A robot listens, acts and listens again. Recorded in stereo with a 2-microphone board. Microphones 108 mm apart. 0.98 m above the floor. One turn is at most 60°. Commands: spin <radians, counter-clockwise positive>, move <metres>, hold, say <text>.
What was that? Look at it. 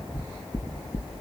spin 0.61
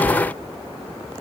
hold
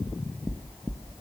say Facing the knocking.